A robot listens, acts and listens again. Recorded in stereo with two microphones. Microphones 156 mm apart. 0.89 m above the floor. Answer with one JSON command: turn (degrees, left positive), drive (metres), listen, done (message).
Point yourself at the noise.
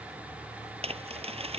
{"turn": -40}
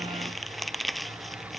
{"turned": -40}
{"done": "Found it: crumpling, straight ahead."}